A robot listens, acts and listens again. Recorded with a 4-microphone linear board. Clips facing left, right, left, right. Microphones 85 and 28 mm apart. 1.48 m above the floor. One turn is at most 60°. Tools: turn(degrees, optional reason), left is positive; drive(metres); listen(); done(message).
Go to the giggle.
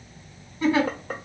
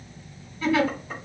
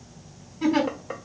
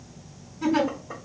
turn(degrees=25, reason="The giggle: about 25° left or 155° left.")
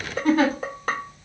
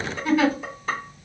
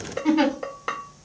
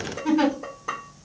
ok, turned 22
turn(degrees=60, reason="So it is at 130° left.")
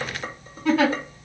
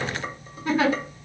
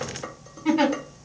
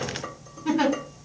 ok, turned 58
turn(degrees=60, reason="The giggle is now 75° left.")
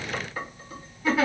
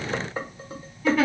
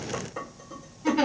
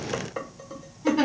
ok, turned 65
turn(degrees=10, reason="The giggle is now 10° left.")
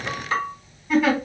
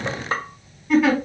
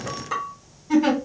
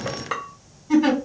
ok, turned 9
drive(metres=1.0)
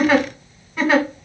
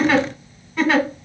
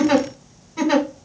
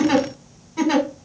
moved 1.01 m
turn(degrees=10, reason="The giggle is now 10° left.")
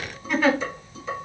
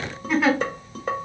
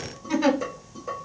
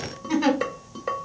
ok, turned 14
drive(metres=1.0)
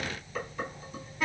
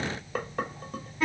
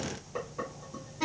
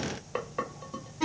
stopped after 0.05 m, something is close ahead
done("Arrived at the giggle, straight ahead.")